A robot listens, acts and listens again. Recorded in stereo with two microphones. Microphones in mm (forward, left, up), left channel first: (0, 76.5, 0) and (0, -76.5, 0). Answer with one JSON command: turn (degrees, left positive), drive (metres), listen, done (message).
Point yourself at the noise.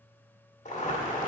{"turn": 55}
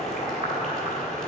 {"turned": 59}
{"turn": 65}
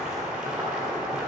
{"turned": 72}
{"done": "Found it: boiling, straight ahead."}